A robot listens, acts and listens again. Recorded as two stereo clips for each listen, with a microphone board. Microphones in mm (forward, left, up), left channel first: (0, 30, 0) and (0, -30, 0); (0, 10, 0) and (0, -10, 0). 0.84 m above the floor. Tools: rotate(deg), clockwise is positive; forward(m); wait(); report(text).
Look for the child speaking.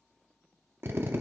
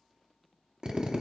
wait()
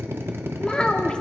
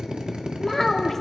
rotate(-15)
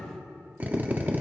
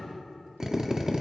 wait()
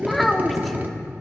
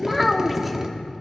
report("Found it: a child speaking, straight ahead, under 1 m away.")